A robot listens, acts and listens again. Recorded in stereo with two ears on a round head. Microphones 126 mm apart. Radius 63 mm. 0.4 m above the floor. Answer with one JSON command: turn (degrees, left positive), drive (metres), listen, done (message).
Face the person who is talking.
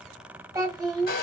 {"turn": -25}
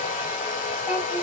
{"listen": true}
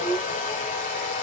{"done": "Found it: a child speaking, straight ahead."}